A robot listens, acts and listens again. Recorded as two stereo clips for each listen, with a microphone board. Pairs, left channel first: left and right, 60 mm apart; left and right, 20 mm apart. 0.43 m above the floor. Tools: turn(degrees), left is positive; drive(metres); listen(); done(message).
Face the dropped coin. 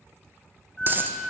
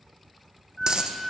turn(degrees=-35)
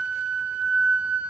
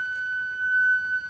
listen()
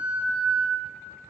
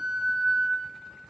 done("I heard a dropped coin, but can't make it out now. It was about straight ahead or 110° right.")